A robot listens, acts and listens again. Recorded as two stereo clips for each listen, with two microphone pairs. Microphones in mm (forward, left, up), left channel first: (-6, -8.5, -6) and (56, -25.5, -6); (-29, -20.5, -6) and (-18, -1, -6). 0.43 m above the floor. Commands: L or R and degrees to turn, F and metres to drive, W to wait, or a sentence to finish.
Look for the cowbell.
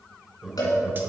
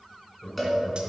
L155
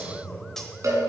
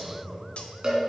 L10
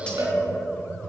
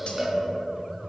Facing the cowbell, 2 to 4 m away.